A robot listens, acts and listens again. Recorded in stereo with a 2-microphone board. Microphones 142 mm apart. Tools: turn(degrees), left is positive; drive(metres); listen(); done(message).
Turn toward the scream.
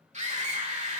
turn(degrees=-55)
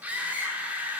turn(degrees=-15)
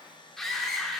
done("Facing the scream, 2 to 4 m away.")